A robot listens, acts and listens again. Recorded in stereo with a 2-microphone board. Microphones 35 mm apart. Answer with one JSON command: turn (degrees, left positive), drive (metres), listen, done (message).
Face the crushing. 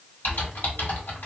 {"listen": true}
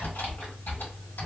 {"listen": true}
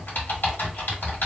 {"done": "I can't make out crushing to turn to."}